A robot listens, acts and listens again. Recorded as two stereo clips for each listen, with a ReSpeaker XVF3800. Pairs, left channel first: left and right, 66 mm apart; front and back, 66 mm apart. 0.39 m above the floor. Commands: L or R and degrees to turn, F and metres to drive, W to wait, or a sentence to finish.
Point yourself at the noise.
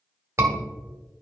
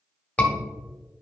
R60
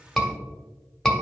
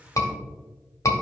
Facing the scream.